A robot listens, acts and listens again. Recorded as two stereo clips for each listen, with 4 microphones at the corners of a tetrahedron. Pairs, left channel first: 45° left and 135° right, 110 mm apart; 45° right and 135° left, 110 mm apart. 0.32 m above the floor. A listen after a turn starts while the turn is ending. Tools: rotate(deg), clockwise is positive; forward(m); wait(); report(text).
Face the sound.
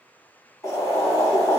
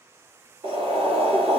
rotate(-105)
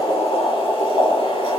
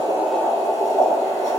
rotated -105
rotate(-10)
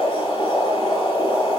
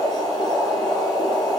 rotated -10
report("Facing the boiling.")